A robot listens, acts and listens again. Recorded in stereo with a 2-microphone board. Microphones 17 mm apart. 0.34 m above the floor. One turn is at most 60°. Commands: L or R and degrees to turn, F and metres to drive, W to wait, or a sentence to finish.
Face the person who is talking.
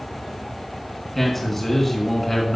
L30
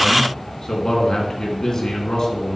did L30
L60
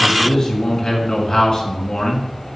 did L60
L50
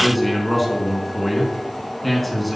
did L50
L10
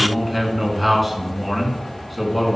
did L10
Facing the man speaking.